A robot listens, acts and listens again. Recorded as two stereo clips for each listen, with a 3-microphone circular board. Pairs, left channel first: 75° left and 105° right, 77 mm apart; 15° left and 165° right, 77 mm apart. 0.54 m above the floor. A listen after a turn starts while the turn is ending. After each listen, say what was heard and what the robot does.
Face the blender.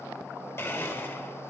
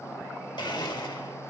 The blender: 20° left. Turn 20° left.
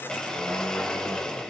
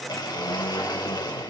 Facing the blender.